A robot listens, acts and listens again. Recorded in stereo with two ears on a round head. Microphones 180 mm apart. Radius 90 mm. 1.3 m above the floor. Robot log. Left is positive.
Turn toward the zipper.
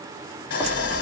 cmd yaw +30
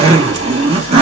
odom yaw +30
note: So it is at 30° right.
cmd yaw -30
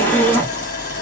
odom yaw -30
note: The zipper is now 10° left.
cmd yaw +10
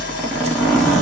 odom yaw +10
end: Found it: a zipper, straight ahead.